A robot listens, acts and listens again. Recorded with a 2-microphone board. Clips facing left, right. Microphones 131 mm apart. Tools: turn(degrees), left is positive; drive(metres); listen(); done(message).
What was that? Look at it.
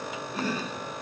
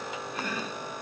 turn(degrees=30)
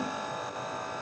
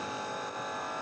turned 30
listen()
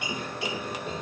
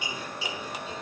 turn(degrees=120)
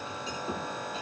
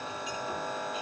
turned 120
listen()
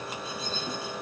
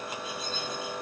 listen()
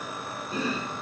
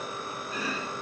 turn(degrees=35)
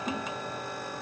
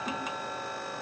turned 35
done("Facing the chopping, over 4 m away.")